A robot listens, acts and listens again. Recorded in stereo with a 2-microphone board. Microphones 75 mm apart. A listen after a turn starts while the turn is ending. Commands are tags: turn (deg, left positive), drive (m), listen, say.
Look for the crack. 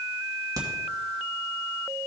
<turn deg="-55"/>
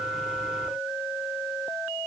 <listen/>
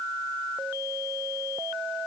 <say>I heard a crack, but can't make it out now. It was about straight ahead or 70° right.</say>